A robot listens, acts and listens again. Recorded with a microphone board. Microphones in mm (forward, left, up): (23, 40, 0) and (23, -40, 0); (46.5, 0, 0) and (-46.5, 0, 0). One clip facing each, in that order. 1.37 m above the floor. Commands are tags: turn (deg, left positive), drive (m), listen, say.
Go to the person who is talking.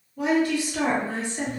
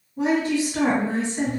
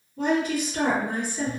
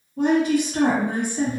<turn deg="-155"/>
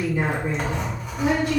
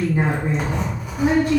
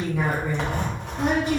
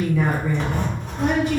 <turn deg="-40"/>
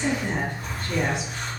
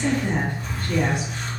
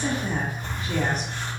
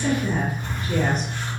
<turn deg="20"/>
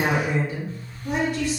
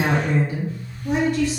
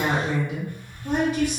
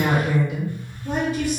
<drive m="1.0"/>
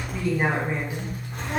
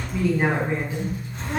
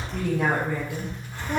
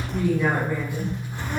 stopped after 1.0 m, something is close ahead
<say>I am next to the woman speaking.</say>